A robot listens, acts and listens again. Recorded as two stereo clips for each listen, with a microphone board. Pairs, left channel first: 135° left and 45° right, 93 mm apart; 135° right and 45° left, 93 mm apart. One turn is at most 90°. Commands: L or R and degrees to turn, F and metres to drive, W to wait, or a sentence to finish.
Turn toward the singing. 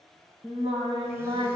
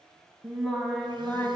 R70
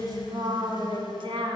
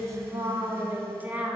R30
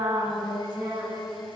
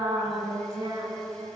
R10
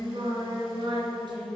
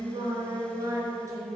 R10
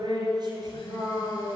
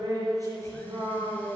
Facing the singing, 2 to 4 m away.